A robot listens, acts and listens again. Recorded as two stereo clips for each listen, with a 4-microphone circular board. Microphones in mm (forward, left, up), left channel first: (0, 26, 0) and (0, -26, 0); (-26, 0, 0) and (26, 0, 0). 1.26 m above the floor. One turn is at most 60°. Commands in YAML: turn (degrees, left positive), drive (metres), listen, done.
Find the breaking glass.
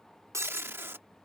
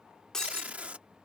turn: -60
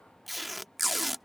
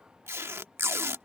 turn: -40
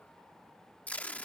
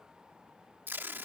done: "I heard breaking glass from this way, but can't make it out now."